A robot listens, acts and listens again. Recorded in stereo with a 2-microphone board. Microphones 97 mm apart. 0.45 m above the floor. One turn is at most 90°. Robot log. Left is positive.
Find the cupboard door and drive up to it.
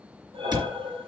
note: The cupboard door: about 50° right or 130° right.
cmd yaw -50
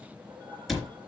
cmd fwd 1.0
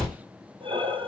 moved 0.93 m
cmd fwd 1.0
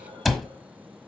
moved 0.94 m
cmd fwd 1.0
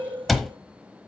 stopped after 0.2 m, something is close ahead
end: I am next to the cupboard door.